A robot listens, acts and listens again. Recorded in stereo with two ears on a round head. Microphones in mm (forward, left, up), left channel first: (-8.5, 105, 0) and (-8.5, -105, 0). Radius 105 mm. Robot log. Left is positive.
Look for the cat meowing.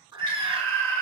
note: The cat meowing: about 20° right or 160° right.
cmd yaw -20
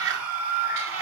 note: So it is at 115° right.
cmd yaw -115
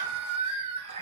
note: The cat meowing is now 25° right.
cmd yaw -25
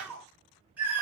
end: Found it: a cat meowing, straight ahead.